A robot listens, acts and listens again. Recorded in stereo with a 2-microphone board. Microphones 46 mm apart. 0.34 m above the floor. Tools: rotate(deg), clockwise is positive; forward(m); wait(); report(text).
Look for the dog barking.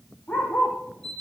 rotate(-50)
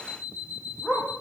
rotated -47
report("Found it: a dog barking, straight ahead, over 4 m away.")